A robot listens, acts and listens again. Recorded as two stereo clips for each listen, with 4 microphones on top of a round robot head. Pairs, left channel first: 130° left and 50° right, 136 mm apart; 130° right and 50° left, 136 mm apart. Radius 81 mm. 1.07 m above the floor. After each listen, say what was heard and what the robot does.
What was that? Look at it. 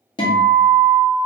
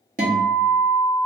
The guitar: 80° left. Turn 80° left.
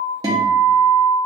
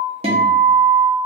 The guitar is now 10° left. Turn 10° left.
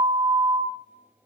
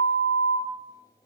Found it: a guitar, straight ahead.